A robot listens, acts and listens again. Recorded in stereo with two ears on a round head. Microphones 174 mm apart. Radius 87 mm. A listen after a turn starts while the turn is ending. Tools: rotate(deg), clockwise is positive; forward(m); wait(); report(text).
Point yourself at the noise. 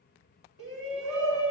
rotate(70)
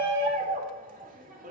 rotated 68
rotate(45)
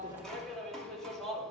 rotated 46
report("Found it: a shout, straight ahead, 2 to 4 m away.")